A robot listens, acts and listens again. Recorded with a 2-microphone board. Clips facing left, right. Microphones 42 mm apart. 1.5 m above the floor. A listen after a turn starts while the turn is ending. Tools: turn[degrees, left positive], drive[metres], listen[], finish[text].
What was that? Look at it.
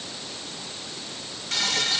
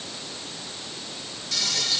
Thought: The frying: about 45° left or 135° left.
Action: turn[45]
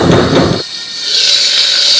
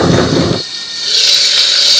Action: finish[Facing the frying, 1 to 2 m away.]